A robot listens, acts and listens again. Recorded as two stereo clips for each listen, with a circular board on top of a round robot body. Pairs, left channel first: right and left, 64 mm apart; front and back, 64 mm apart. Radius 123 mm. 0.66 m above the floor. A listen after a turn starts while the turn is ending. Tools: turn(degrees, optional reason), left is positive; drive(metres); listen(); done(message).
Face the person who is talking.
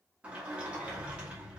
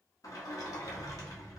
listen()
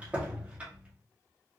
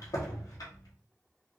listen()
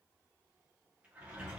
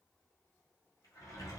done("I can't make out anyone speaking to turn to.")